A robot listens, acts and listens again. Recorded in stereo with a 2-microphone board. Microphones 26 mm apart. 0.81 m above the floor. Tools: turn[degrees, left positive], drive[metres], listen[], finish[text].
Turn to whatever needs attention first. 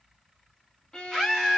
Action: turn[-30]
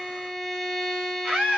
Thought: So it is at 140° right.
Action: turn[-140]
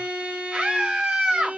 Thought: The scream is now 55° right.
Action: turn[-55]
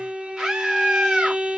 Thought: The scream is now 20° right.
Action: turn[-20]
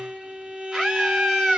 Action: finish[Facing the scream.]